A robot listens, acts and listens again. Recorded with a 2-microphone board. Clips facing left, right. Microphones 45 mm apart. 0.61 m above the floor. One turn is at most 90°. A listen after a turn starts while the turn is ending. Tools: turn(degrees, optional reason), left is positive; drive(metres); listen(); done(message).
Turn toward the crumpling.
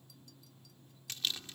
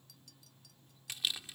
turn(degrees=-30)
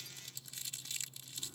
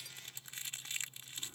turn(degrees=-90, reason="So it is at 130° right.")
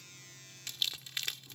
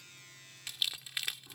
turn(degrees=-10, reason="The crumpling is now 10° right.")
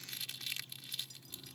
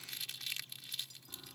done("Found it: crumpling, straight ahead.")